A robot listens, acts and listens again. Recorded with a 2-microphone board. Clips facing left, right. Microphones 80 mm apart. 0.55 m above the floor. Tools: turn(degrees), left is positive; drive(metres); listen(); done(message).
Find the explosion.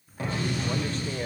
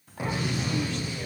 turn(degrees=-30)
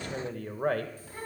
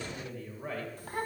listen()
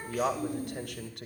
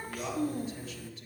done("I heard an explosion, but can't make it out now. It was about 15° left or 135° right.")